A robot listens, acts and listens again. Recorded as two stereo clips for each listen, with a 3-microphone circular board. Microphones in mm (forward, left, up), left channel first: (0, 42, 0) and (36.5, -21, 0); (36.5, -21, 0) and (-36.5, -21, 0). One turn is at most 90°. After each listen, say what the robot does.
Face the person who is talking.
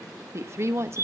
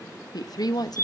Turn 15° right.
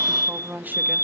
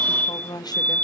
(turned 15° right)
Facing the woman speaking, 1 to 2 m away.